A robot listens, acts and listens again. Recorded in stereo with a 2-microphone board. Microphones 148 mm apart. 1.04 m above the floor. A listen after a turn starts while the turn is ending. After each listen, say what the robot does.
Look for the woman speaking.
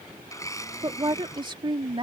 Turn 35° right.
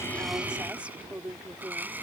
Turn 10° right.
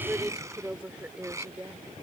Turn 10° right.
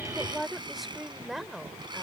Facing the woman speaking.